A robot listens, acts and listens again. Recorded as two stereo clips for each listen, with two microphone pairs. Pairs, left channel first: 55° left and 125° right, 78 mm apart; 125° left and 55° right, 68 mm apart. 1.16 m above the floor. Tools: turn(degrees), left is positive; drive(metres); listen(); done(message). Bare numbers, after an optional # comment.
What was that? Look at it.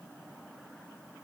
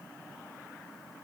listen()
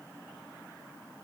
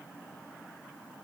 listen()
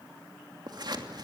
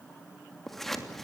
# The scissors: 150° right.
turn(-150)
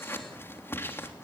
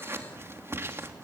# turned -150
done("Found it: scissors, straight ahead.")